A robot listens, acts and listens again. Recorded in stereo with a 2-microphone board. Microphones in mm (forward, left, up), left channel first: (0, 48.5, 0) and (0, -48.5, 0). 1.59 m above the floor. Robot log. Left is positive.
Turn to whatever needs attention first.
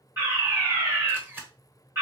note: The fire alarm: about 30° right or 150° right.
cmd yaw -30
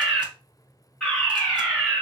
end: Facing the fire alarm, 2 to 4 m away.